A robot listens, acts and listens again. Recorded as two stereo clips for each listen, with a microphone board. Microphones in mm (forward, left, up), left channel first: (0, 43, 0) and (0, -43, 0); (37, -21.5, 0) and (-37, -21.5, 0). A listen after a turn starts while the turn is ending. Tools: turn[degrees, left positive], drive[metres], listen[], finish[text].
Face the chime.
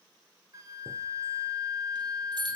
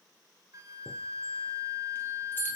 Thought: The chime: 60° right.
Action: turn[-60]
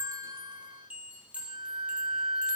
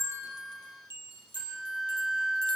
Thought: The chime is now 15° right.
Action: turn[-15]
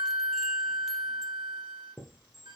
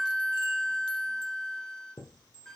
Action: finish[Facing the chime.]